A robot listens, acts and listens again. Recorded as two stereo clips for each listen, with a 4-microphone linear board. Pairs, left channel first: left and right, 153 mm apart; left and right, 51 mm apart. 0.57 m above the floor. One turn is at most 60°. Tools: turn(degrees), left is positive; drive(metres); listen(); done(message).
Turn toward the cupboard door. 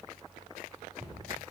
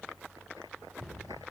turn(degrees=-30)
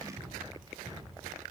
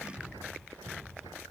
turn(degrees=-60)
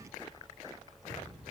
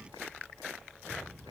turn(degrees=-60)
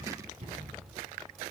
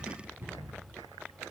turn(degrees=-45)
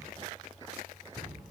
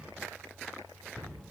turn(degrees=-10)
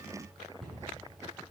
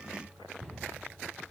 done("Found it: a cupboard door, straight ahead.")